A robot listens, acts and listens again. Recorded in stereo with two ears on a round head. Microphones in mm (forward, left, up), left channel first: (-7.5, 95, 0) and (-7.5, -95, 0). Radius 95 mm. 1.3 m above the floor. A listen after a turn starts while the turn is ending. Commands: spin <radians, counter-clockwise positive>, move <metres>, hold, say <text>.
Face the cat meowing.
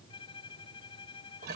hold
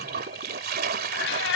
spin 1.05
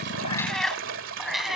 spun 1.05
say Facing the cat meowing.